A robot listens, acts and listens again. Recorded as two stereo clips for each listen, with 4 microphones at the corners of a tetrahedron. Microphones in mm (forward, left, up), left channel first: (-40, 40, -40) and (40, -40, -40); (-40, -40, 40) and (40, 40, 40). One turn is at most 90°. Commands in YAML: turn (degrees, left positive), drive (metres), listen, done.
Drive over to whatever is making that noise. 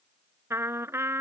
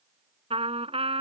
turn: 20
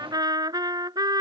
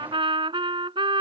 drive: 1.0
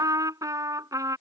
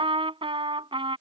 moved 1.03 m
turn: 10
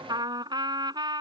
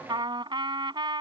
drive: 1.0
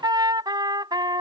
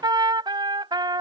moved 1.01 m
drive: 1.0
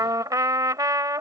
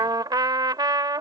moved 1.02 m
drive: 1.0
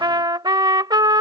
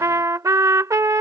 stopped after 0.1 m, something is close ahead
turn: -10
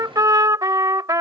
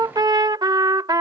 done: "I am next to the trumpet."